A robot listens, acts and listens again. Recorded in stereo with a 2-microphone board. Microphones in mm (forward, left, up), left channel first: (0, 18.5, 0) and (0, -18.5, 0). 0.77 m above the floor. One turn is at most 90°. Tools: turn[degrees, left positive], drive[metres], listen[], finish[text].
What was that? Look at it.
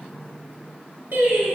Thought: The singing: about 70° right or 110° right.
Action: turn[-70]
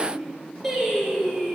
Thought: So it is at 10° left.
Action: turn[10]
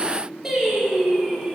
Action: finish[Facing the singing.]